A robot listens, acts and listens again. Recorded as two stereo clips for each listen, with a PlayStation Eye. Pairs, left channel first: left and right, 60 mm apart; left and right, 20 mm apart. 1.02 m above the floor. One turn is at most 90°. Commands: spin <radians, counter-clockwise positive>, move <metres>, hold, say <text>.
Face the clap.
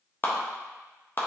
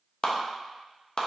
spin 0.70
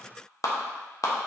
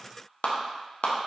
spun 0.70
spin 1.57
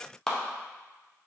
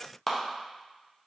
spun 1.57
spin 0.17
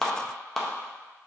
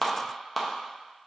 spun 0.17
say Found it: a clap, straight ahead, under 1 m away.